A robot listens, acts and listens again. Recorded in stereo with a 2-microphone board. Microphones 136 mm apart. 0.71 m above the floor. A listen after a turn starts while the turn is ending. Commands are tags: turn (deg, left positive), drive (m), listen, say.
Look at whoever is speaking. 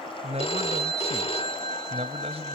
<turn deg="-50"/>
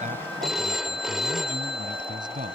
<turn deg="-80"/>
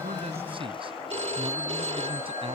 <listen/>
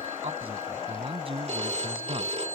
<turn deg="-45"/>
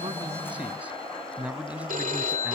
<turn deg="-10"/>
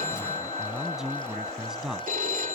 <say>Found it: a man speaking, straight ahead.</say>